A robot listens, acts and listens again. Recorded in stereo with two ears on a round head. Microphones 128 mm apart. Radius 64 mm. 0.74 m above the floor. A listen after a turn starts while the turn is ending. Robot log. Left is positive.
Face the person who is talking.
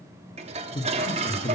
note: The man speaking: about 30° left or 150° left.
cmd yaw +30
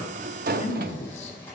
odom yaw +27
note: So it is at 120° left.
cmd yaw +120
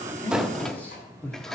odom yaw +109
note: The man speaking is now 15° left.
cmd yaw +15
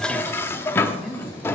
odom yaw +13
end: Found it: a man speaking, straight ahead, 1 to 2 m away.